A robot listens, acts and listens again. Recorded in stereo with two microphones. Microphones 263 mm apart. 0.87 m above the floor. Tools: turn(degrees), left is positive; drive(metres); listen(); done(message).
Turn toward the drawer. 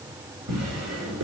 turn(degrees=-90)
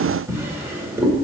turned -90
turn(degrees=-10)
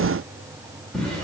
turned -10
done("Facing the drawer, 1 to 2 m away.")